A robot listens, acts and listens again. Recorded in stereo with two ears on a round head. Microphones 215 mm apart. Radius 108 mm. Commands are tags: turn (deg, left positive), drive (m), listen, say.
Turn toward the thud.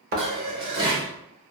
<turn deg="-40"/>
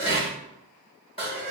<listen/>
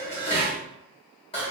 <say>I heard a thud, but can't make it out now. It was about straight ahead or 100° right.</say>